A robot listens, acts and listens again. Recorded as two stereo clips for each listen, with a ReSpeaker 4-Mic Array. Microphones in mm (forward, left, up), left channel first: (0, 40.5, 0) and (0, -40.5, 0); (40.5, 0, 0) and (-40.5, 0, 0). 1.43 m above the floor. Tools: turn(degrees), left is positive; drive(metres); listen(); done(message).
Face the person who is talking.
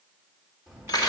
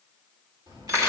turn(degrees=175)
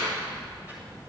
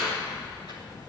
turn(degrees=-25)
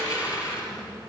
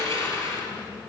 done("Found it: a child speaking, straight ahead.")